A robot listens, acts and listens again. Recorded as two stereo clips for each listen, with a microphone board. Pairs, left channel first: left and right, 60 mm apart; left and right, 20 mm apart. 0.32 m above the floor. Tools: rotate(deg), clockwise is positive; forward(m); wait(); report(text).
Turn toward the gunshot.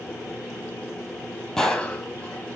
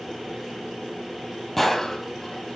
rotate(-30)
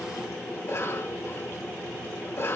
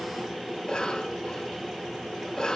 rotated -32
wait()
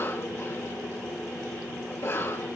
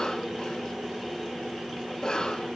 report("I heard a gunshot, but can't make it out now. It was about 25° right or 140° left.")